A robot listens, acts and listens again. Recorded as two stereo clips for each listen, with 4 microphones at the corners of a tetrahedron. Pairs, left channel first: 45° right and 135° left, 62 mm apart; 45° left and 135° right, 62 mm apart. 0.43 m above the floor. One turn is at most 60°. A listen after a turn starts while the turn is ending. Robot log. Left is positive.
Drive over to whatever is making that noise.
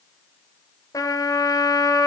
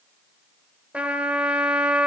note: The trumpet: 65° right.
cmd yaw -60
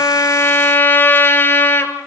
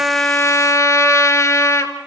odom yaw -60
note: The trumpet is now 10° left.
cmd yaw +10
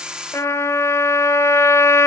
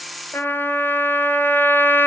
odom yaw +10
cmd fwd 1.0
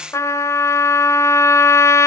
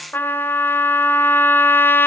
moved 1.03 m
note: The trumpet is now 10° right.
cmd yaw -10
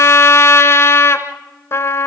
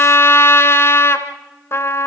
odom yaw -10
cmd fwd 1.0
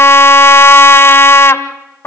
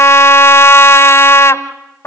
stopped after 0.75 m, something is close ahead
end: Arrived at the trumpet, straight ahead.